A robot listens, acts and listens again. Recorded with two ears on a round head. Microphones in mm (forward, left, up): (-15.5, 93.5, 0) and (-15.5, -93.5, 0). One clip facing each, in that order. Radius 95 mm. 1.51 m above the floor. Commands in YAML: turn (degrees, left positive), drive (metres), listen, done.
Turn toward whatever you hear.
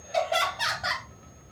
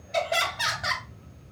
turn: -20
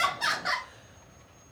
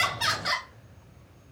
turn: -140
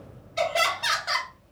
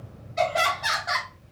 turn: 35
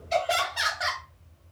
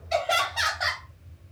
turn: 10
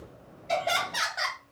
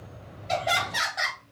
done: "Found it: laughter, straight ahead, 1 to 2 m away."